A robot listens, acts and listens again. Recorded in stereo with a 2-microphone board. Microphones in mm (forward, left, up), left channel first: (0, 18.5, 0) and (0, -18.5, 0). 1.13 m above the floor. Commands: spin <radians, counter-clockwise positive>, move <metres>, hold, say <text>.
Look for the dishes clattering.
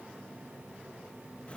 hold
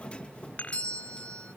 spin 0.70
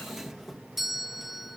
hold
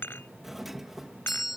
spin 1.75
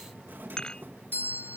spin 0.35
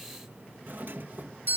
hold
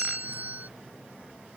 hold
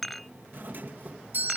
say Found it: dishes clattering, straight ahead.